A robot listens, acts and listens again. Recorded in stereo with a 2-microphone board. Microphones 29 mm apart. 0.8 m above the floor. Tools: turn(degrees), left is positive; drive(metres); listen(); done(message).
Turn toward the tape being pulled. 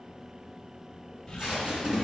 turn(degrees=-35)
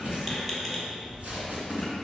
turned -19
turn(degrees=-125)
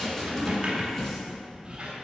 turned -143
turn(degrees=20)
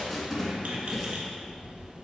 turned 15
done("Found it: tape being pulled, straight ahead, 1 to 2 m away.")